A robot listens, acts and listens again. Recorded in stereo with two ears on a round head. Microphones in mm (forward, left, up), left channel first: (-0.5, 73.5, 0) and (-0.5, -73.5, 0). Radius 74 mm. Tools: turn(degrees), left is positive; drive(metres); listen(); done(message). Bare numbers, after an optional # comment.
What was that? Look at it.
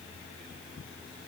listen()
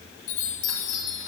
# The chime: about 50° left or 130° left.
turn(50)
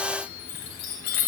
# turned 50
# So it is at 80° left.
turn(80)
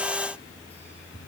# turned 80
listen()
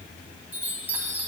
# The chime is now 10° right.
turn(-10)
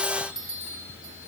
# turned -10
done("Found it: a chime, straight ahead, 1 to 2 m away.")